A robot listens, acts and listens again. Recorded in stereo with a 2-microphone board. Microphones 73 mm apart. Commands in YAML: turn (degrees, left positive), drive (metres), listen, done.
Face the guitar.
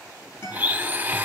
turn: 30
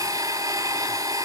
listen: true
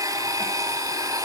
listen: true
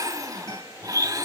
done: "I heard a guitar, but can't make it out now. It was about straight ahead or 120° left."